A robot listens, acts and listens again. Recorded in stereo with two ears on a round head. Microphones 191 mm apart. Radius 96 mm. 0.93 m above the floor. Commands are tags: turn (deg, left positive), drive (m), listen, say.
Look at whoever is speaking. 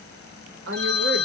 <turn deg="-55"/>
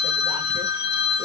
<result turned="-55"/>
<listen/>
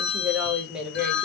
<say>Found it: a woman speaking, straight ahead, under 1 m away.</say>